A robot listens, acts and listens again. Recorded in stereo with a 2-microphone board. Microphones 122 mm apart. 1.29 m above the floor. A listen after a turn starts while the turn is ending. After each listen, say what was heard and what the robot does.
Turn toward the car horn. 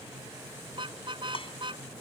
The car horn: about 45° right or 135° right. Turn 45° right.
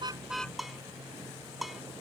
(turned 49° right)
Keep listening.
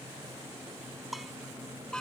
Found it: a car horn, straight ahead.